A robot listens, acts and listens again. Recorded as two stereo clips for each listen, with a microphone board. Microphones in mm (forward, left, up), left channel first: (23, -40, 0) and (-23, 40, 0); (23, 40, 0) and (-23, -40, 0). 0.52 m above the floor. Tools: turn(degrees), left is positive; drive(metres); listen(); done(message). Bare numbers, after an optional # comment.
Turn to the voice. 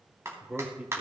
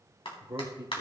# The man speaking: 160° right.
turn(-160)
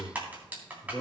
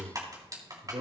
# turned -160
# The man speaking is now 115° right.
turn(-115)
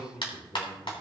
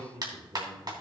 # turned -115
# The man speaking is now 50° right.
turn(-50)
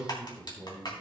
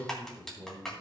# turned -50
done("Facing the man speaking.")